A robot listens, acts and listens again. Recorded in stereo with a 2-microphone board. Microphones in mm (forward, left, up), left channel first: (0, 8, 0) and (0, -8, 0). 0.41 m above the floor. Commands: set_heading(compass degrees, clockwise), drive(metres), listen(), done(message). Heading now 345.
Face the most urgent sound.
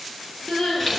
set_heading(255)
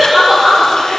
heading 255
done("Found it: crying, straight ahead, over 4 m away.")